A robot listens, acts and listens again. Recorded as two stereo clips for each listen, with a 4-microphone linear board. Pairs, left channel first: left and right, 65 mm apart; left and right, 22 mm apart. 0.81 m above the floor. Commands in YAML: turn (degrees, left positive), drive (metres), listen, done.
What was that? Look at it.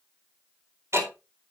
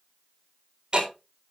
turn: -45
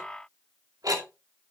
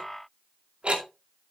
turn: -90
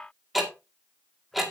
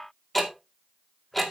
done: "Facing the ticking, 2 to 4 m away."